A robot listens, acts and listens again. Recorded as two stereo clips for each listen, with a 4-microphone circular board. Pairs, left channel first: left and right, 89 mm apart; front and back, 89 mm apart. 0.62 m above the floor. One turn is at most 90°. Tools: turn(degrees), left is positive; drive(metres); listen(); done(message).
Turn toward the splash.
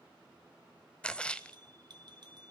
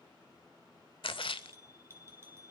turn(degrees=15)
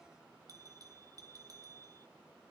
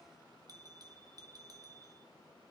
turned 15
done("Facing where the splash came from. I can't hear it now.")